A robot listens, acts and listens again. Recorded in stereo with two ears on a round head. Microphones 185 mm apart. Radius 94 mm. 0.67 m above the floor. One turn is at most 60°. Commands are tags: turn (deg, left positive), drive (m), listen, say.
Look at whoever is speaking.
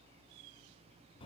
<listen/>
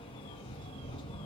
<listen/>
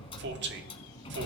<turn deg="-60"/>
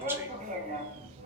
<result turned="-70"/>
<listen/>
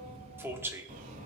<turn deg="-15"/>
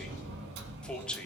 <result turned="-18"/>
<say>Facing the man speaking, 1 to 2 m away.</say>